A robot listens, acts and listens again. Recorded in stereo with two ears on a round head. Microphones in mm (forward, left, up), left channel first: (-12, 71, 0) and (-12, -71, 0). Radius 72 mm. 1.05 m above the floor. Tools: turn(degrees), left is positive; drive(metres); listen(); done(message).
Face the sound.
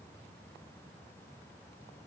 listen()
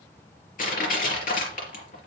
turn(degrees=60)
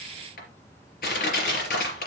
turn(degrees=60)
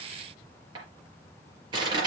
turn(degrees=-30)
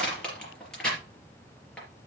done("Facing the crushing, 2 to 4 m away.")